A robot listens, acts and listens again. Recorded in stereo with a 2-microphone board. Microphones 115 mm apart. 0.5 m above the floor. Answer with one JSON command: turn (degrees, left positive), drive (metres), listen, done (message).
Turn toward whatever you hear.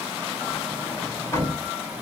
{"turn": 25}
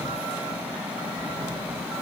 {"listen": true}
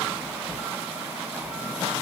{"done": "Facing the sliding door, 2 to 4 m away."}